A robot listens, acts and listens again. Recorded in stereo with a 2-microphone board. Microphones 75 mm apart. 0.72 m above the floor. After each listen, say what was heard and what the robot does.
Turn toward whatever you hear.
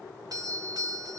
The doorbell: about 55° right or 125° right. Turn 55° right.
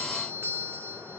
So it is at 40° right. Turn 40° right.
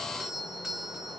Facing the doorbell, 1 to 2 m away.